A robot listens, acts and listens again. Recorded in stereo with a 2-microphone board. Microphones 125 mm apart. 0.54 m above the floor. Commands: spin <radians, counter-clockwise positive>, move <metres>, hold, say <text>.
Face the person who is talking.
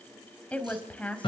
spin 0.52
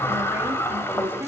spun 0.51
spin -0.35
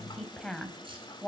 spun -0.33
say Found it: a woman speaking, straight ahead, 2 to 4 m away.